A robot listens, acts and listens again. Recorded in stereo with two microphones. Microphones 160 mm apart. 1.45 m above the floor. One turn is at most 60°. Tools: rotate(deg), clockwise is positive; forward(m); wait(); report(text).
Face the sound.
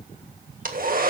rotate(60)
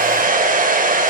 rotate(60)
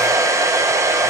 rotate(20)
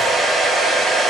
report("Found it: a hair dryer, straight ahead, 1 to 2 m away.")